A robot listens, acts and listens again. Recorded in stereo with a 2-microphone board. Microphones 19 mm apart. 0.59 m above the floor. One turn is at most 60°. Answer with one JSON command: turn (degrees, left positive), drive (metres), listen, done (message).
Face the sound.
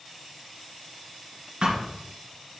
{"turn": -55}
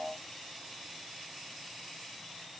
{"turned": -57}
{"listen": true}
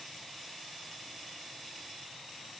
{"done": "I heard a thud, but can't make it out now. It was about straight ahead or 65° right."}